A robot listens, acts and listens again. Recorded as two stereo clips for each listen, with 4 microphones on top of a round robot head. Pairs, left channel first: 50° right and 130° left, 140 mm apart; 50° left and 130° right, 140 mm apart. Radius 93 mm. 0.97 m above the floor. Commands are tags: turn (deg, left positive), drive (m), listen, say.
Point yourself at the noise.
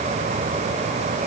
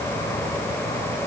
<listen/>
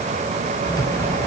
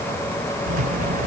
<turn deg="-115"/>
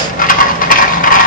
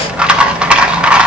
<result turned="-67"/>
<turn deg="-50"/>
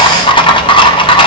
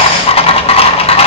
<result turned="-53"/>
<say>Found it: a rattle, straight ahead.</say>